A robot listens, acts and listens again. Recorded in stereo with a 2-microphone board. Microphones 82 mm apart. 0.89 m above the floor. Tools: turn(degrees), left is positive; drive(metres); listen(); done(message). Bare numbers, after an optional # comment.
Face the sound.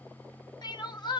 # The crying: about 65° left or 115° left.
turn(65)
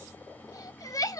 # So it is at 45° left.
turn(45)
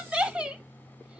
# The crying is now 15° right.
turn(-15)
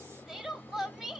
# The crying is now 10° right.
turn(-10)
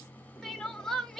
done("Found it: crying, straight ahead, under 1 m away.")